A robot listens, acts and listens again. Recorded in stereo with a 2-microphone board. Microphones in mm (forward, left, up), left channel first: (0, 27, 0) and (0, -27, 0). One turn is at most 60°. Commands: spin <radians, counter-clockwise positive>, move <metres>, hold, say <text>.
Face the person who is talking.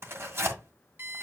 hold
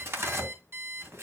hold
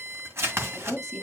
spin 0.52
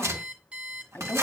spin 1.05
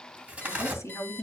spin 1.05
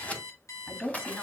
spin 0.61
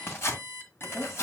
say Facing the woman speaking.